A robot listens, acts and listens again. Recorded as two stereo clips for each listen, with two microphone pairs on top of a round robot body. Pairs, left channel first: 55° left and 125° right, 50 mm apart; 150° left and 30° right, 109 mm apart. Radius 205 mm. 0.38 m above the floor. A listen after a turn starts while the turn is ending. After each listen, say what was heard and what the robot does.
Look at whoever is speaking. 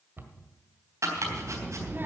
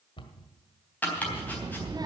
The child speaking: 80° right. Turn 80° right.
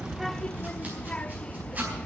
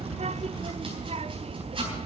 The child speaking is now 15° right. Turn 15° right.
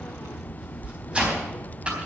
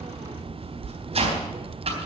Found it: a child speaking, straight ahead, under 1 m away.